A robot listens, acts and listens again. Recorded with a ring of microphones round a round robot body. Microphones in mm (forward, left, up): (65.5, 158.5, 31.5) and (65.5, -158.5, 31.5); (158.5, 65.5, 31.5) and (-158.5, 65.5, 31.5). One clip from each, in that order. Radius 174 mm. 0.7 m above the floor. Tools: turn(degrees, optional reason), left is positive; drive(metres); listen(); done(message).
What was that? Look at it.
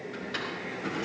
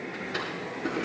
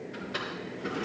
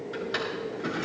turn(degrees=155, reason="The drawer: 155° left.")
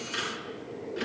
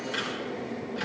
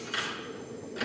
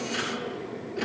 done("Facing the drawer, over 4 m away.")